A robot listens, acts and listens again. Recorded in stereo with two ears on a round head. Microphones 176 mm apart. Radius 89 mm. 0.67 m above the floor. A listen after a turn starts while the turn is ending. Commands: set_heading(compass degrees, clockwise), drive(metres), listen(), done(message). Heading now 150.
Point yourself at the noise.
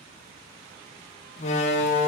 set_heading(115)
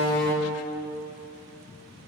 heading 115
done("Found it: a door slam, straight ahead, under 1 m away.")